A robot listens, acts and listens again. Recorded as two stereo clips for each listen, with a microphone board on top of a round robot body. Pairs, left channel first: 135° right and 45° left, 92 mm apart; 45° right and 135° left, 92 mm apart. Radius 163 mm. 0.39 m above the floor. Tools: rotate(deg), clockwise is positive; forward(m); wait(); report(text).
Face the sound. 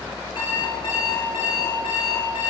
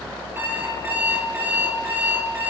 rotate(160)
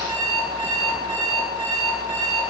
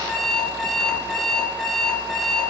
rotate(-40)
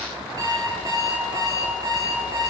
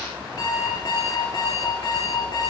report("Found it: an alarm clock, straight ahead.")